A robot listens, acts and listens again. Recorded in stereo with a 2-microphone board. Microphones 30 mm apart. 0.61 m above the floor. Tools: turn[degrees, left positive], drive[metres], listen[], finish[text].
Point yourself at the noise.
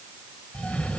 Thought: The cough: about 30° left or 150° left.
Action: turn[30]
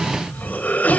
Thought: So it is at 115° left.
Action: turn[115]
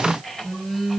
Thought: The cough is now 10° left.
Action: turn[10]
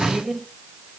Action: finish[Facing the cough.]